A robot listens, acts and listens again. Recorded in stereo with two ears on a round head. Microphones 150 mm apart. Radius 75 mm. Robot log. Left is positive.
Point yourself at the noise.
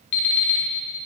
cmd yaw +90
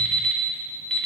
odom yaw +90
end: Found it: an alarm clock, straight ahead.